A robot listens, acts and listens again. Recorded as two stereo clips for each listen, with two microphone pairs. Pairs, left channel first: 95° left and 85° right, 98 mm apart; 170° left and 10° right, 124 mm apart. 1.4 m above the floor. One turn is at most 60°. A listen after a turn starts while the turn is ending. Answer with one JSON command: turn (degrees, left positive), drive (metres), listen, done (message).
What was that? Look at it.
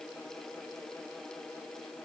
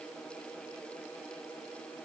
{"listen": true}
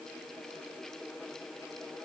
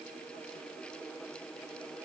{"listen": true}
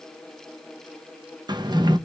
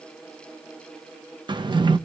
{"turn": -50}
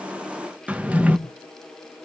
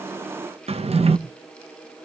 {"done": "Found it: a drawer, straight ahead."}